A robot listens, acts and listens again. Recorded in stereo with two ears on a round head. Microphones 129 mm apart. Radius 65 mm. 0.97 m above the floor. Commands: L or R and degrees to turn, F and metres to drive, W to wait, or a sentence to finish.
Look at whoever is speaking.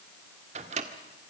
W
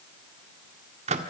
W
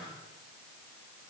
I can't make out anyone speaking, only a microwave.